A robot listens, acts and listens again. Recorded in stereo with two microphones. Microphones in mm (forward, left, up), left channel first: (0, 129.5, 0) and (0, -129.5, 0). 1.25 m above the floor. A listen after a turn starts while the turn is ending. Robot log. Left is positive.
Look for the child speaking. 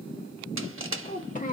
note: The child speaking: about 30° left or 150° left.
cmd yaw +30
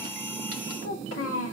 note: So it is at 120° left.
cmd yaw +120
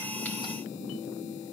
cmd idle
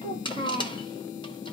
note: The child speaking is now 20° left.
cmd yaw +20
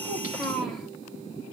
end: Facing the child speaking.